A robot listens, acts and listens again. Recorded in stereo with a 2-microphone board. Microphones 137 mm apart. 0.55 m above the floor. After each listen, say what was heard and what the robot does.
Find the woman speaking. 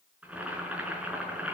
Keep listening.
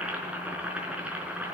Keep listening.
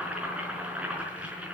I can't make out a woman speaking to turn to.